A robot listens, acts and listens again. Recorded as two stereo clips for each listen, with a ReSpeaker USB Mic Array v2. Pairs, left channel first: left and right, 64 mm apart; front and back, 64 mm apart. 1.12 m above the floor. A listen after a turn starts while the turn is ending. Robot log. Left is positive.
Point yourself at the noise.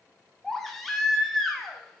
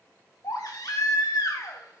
end: Facing the baby crying.